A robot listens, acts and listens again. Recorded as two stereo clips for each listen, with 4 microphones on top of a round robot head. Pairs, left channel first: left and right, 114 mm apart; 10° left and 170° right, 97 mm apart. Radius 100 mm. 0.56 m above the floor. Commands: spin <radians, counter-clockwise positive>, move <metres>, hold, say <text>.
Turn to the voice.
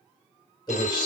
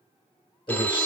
spin 0.70
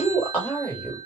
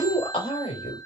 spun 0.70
spin 0.35
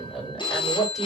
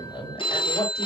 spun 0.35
say Facing the man speaking.